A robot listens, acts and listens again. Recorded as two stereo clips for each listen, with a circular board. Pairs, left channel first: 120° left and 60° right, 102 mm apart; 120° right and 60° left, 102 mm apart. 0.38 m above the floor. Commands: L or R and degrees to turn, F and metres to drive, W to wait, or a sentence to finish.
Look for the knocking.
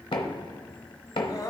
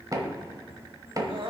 L105
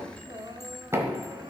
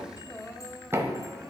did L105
Facing the knocking, 1 to 2 m away.